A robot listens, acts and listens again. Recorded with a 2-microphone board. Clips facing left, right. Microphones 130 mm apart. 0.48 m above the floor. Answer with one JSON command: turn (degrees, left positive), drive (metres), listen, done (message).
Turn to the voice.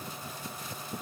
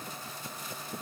{"listen": true}
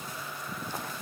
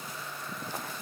{"listen": true}
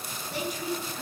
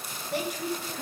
{"turn": -65}
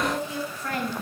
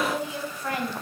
{"turn": -15}
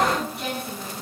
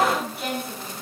{"done": "Found it: a woman speaking, straight ahead."}